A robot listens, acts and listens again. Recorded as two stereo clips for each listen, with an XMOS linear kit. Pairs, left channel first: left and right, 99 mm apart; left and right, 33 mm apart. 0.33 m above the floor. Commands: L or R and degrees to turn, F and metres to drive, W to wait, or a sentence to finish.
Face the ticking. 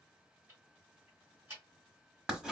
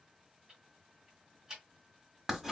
R25
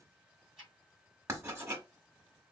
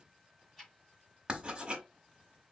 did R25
Facing the ticking, 2 to 4 m away.